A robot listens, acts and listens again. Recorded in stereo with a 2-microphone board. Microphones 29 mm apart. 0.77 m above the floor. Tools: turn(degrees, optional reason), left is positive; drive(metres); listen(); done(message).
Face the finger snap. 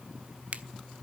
turn(degrees=-50, reason="The finger snap: about 50° right or 130° right.")
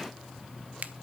turn(degrees=-75, reason="So it is at 75° right.")
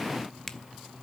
turn(degrees=20, reason="The finger snap is now 20° left.")
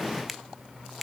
done("Found it: a finger snap, straight ahead, under 1 m away.")